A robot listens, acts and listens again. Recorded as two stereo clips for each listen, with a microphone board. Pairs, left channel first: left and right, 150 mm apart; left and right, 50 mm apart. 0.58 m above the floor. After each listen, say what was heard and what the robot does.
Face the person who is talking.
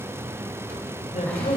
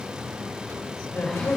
The man speaking: about 60° left or 120° left. Turn 60° left.
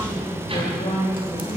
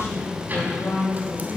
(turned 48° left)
So it is at 50° left. Turn 50° left.
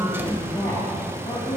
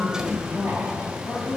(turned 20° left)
The man speaking is now 25° left. Turn 25° left.
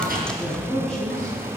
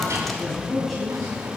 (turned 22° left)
Found it: a man speaking, straight ahead.